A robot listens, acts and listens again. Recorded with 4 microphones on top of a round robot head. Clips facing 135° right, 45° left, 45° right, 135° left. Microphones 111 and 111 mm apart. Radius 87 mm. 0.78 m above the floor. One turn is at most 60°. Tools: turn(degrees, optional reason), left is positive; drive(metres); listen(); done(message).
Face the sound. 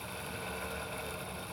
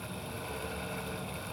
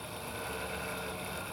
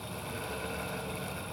listen()
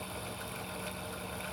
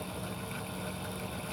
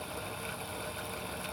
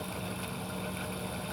listen()
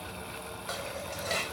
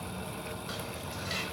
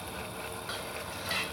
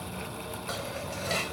turn(degrees=-60, reason="The dishes clattering: 175° right.")
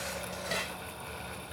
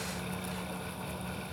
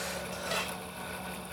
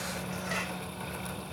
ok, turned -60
turn(degrees=-60, reason="The dishes clattering is now 115° right.")
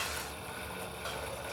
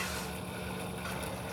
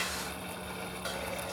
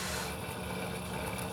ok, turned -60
turn(degrees=-55, reason="Nothing new. It was at 55° right.")
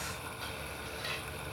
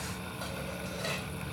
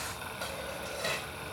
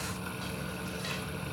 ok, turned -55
done("Found it: dishes clattering, straight ahead.")